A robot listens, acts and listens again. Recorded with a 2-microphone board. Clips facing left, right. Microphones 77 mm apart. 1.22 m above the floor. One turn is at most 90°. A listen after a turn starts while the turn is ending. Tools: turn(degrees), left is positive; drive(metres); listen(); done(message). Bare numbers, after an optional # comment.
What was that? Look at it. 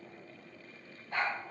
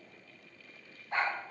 # The dog barking: about 25° right or 155° right.
turn(-25)
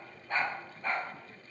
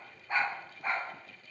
turn(-30)
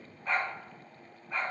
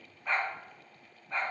done("Facing the dog barking.")